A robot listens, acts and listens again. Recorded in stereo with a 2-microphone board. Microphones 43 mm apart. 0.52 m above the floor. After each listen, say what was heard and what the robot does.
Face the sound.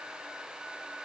Keep listening.
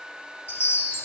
The chime: about 60° left or 120° left. Turn 60° left.
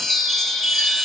Found it: a chime, straight ahead.